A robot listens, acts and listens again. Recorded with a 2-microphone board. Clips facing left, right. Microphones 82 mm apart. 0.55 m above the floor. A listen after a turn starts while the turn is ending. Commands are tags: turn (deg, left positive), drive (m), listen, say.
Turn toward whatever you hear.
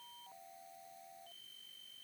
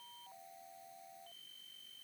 <listen/>
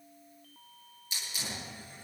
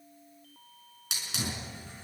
<turn deg="-90"/>
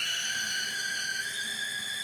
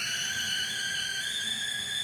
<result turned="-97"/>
<turn deg="15"/>
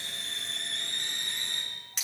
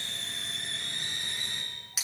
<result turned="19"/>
<say>Found it: a hiss, straight ahead.</say>